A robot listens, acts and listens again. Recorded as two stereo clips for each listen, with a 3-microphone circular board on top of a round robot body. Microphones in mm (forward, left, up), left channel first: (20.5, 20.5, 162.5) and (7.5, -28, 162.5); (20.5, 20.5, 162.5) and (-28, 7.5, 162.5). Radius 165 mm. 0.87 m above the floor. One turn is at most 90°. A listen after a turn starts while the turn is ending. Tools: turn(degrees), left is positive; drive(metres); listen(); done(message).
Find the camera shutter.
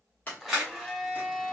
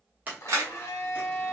turn(degrees=90)
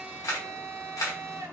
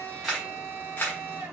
turn(degrees=65)
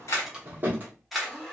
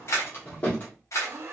turn(degrees=-15)
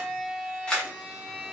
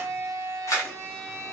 done("Facing the camera shutter, under 1 m away.")